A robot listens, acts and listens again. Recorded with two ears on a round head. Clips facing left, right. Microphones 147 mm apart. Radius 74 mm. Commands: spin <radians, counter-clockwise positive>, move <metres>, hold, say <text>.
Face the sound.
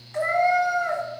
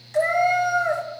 spin -0.61
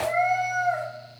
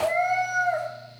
say Found it: a cat meowing, straight ahead, 1 to 2 m away.